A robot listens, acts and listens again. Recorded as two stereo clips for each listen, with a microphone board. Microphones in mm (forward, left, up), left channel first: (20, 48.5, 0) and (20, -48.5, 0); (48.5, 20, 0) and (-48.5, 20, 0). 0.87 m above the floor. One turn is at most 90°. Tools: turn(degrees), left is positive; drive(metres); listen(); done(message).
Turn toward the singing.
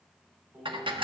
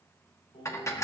turn(degrees=-15)
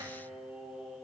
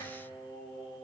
turn(degrees=-10)
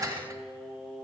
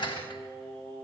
turn(degrees=-10)
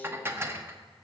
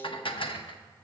listen()
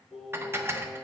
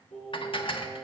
turn(degrees=-10)
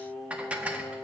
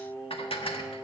done("Found it: singing, straight ahead, over 4 m away.")